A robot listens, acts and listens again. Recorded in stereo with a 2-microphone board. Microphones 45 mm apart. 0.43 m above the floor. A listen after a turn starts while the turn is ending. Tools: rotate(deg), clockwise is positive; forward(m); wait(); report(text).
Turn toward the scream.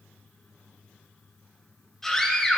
rotate(-30)
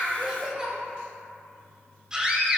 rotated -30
rotate(20)
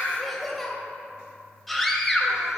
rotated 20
report("Facing the scream, 2 to 4 m away.")